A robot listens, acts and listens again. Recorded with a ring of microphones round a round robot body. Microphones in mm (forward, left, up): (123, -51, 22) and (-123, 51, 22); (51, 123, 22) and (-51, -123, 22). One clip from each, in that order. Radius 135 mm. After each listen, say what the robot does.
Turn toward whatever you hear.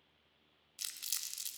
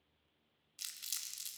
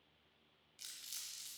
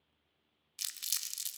Turn 105° right.
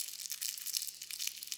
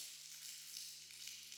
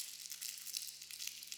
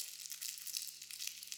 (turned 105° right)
Turn 30° right.
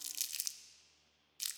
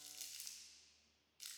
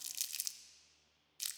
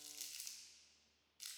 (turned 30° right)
Turn 20° left.
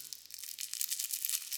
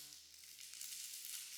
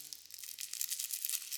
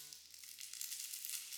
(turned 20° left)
Found it: crumpling, straight ahead.